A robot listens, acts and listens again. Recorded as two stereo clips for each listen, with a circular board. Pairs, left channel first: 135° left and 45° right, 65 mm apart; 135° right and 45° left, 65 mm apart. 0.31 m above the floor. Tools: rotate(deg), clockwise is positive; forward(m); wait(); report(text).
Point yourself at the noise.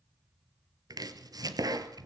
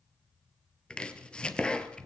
rotate(60)
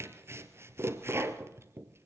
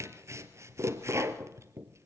report("Facing the chopping.")